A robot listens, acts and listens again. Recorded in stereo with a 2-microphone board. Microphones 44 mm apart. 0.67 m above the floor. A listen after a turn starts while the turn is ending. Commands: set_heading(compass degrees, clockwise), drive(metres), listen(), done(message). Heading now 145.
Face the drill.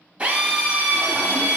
set_heading(165)
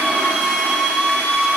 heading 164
done("Found it: a drill, straight ahead.")